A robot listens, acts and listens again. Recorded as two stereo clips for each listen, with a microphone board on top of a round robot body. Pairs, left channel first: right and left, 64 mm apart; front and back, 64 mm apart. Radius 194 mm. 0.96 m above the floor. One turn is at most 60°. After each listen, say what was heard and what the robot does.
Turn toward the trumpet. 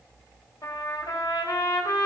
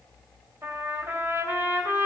The trumpet: 130° right. Turn 60° right.
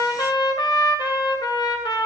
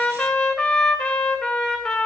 The trumpet is now 85° right. Turn 60° right.
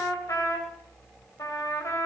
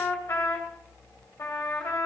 The trumpet is now 55° right. Turn 55° right.
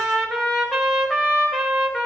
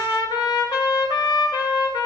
Found it: a trumpet, straight ahead, 2 to 4 m away.